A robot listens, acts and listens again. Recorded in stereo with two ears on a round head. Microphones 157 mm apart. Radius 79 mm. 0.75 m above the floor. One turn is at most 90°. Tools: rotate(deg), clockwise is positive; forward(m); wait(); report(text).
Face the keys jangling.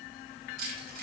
rotate(60)
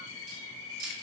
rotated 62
rotate(55)
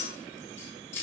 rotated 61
rotate(-15)
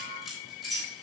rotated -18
report("Found it: keys jangling, straight ahead, over 4 m away.")